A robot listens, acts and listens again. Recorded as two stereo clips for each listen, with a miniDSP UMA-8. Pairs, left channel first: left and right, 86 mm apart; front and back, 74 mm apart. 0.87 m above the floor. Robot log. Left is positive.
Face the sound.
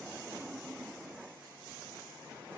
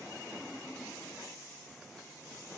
cmd idle
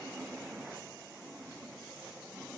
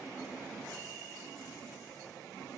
cmd idle
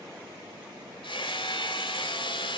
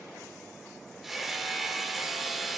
note: The hammering: 95° left.
cmd yaw +95
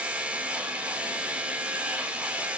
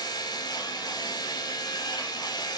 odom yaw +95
note: The hammering is now 15° right.
cmd yaw -15
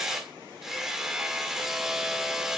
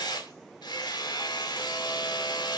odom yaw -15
end: Found it: hammering, straight ahead, 1 to 2 m away.